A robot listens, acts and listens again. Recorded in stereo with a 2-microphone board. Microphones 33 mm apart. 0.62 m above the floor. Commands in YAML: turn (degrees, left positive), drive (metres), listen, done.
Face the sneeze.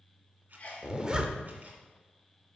turn: 45
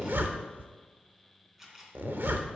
listen: true
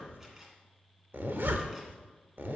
done: "I heard a sneeze, but can't make it out now. It was about straight ahead or 90° left."